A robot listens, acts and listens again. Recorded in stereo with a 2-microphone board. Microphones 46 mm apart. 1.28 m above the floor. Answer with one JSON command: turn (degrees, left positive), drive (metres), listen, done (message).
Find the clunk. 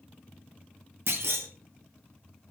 {"turn": -70}
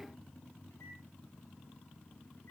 {"listen": true}
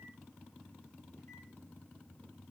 {"done": "I heard a clunk, but can't make it out now. It was about straight ahead or 40° right."}